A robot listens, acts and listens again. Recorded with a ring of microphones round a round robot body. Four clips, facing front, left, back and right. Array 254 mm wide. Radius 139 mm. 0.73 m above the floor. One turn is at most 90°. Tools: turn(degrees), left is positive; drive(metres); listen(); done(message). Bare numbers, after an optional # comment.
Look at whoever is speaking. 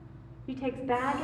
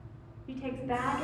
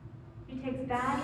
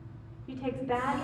# The woman speaking: 10° right.
turn(-10)
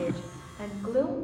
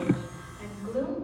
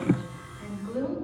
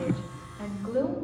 done("Found it: a woman speaking, straight ahead, 2 to 4 m away.")